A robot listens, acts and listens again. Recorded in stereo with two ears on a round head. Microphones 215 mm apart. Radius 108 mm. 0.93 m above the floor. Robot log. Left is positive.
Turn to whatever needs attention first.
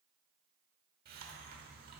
cmd idle
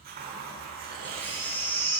cmd yaw +30
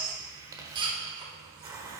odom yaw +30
note: So it is at 20° right.
cmd yaw -20
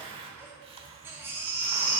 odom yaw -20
note: The baby crying is now 10° right.
cmd yaw -10
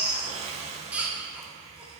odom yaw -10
end: Facing the baby crying, 1 to 2 m away.